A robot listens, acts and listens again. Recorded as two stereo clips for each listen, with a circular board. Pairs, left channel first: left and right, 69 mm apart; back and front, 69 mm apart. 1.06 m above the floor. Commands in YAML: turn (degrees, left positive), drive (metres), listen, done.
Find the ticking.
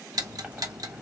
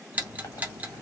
turn: -65
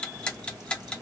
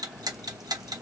turn: 15
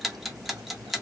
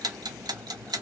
done: "Found it: ticking, straight ahead, under 1 m away."